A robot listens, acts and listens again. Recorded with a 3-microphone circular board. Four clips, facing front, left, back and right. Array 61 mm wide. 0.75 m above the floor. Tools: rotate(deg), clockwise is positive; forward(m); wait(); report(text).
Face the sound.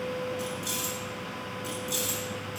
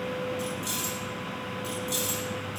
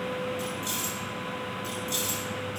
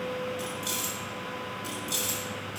rotate(70)
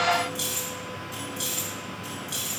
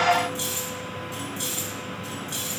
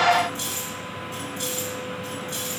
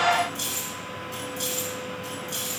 report("Facing the keys jangling.")